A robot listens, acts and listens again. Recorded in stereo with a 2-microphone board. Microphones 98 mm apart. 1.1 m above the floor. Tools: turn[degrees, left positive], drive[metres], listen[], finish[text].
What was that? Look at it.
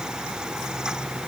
Action: listen[]
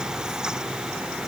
Action: listen[]
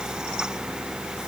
Action: finish[I can't make out anything.]